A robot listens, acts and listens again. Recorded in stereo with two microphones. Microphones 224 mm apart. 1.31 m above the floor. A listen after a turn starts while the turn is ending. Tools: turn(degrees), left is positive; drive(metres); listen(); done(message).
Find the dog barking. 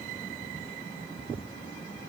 listen()
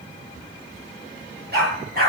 turn(degrees=-45)
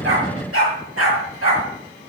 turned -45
turn(degrees=-95)
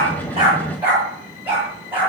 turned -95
done("Found it: a dog barking, straight ahead, over 4 m away.")